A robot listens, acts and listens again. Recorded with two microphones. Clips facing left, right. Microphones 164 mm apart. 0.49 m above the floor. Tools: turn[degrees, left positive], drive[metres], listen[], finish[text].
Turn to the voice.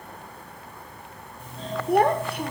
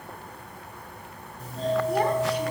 Thought: The child speaking: about 60° left or 120° left.
Action: turn[60]
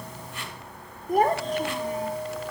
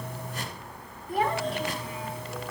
Thought: So it is at 50° left.
Action: turn[50]
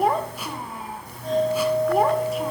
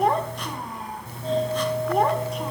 Action: finish[Facing the child speaking.]